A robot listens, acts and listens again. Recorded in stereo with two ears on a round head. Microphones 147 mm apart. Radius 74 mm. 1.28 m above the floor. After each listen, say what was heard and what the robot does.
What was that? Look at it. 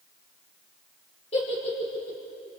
The giggle: about 40° left or 140° left. Turn 40° left.
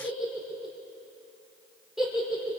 Facing the giggle, over 4 m away.